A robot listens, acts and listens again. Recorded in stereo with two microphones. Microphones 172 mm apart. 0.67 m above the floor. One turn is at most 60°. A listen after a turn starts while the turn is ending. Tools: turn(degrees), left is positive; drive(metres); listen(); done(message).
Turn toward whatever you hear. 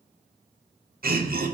turn(degrees=-60)
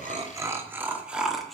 done("Found it: laughter, straight ahead, 1 to 2 m away.")